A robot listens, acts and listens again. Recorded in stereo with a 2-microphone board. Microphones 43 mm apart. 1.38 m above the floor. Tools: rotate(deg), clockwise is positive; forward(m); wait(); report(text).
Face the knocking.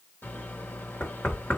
rotate(-55)
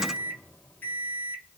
wait()
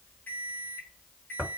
report("Facing the knocking.")